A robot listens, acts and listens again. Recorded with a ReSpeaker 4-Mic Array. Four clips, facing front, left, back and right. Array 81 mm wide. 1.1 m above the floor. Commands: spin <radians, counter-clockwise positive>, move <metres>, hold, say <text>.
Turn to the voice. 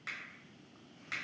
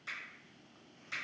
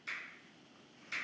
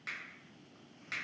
hold
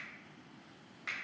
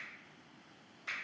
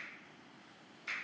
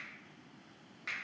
hold
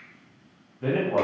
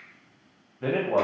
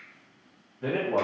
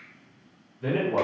spin 1.48
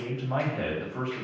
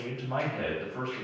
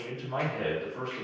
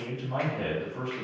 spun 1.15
spin 0.35
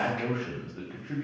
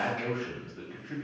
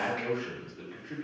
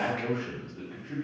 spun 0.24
say Facing the man speaking.